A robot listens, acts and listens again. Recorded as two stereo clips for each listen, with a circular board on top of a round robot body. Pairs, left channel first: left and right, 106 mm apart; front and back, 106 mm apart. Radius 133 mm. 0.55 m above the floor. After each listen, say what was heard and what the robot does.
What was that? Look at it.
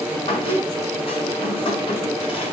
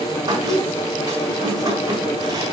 The squeak: 125° left. Turn 125° left.
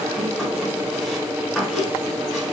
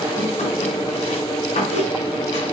Found it: a squeak, straight ahead.